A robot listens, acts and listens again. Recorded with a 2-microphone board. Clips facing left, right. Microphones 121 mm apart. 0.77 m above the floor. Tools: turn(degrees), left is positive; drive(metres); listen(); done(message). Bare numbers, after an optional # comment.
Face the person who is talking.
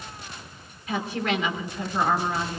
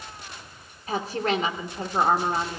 # The woman speaking: about 40° right or 140° right.
turn(-40)
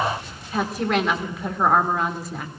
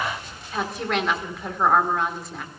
done("Found it: a woman speaking, straight ahead.")